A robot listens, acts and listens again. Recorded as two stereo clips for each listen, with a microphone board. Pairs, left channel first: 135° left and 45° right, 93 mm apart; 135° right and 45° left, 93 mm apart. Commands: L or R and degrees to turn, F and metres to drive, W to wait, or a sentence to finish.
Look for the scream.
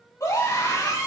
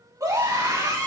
L90
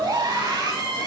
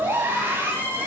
R15
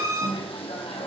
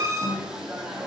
Found it: a scream, straight ahead.